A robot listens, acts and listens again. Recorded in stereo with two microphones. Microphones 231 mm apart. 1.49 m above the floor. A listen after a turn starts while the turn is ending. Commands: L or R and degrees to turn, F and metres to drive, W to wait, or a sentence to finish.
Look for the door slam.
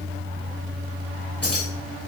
W
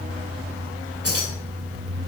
W
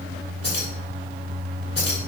I can't make out a door slam, only keys jangling.